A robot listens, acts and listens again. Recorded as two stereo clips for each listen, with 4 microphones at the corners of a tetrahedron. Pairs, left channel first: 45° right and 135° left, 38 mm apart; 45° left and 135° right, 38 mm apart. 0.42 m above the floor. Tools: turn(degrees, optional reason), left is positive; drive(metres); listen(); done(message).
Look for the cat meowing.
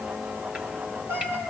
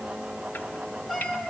turn(degrees=140, reason="The cat meowing: 140° left.")
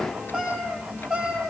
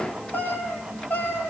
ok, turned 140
turn(degrees=60, reason="The cat meowing is now 60° left.")
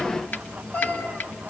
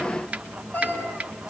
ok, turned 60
done("Found it: a cat meowing, straight ahead.")